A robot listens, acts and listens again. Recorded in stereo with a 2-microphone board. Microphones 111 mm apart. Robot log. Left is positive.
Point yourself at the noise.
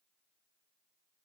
cmd idle
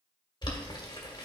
note: The boiling: about 45° left or 135° left.
cmd yaw +45
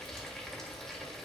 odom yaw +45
end: Facing the boiling.